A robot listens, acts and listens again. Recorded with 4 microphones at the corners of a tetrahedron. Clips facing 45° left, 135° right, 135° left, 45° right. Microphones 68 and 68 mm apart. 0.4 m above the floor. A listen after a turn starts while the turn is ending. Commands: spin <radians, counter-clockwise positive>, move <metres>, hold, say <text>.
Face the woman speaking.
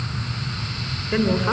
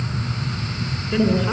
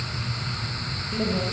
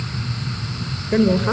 spin -0.26
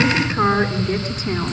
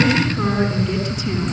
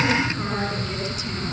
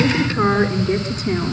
say Found it: a woman speaking, straight ahead.